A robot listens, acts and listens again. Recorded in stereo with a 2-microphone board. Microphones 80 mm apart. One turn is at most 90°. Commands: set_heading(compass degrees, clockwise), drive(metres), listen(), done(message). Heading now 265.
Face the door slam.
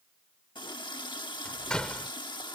set_heading(235)
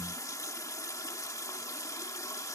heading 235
listen()
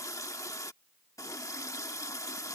done("I heard a door slam, but can't make it out now. It was about 20° right or 140° left.")